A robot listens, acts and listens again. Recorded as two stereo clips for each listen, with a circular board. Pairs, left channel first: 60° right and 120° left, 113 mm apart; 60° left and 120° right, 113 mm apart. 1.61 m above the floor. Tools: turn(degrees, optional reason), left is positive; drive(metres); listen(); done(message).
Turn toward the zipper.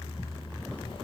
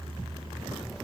listen()
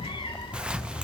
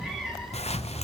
listen()
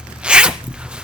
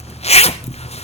turn(degrees=40, reason="The zipper: 40° left.")
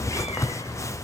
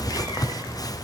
done("Facing the zipper.")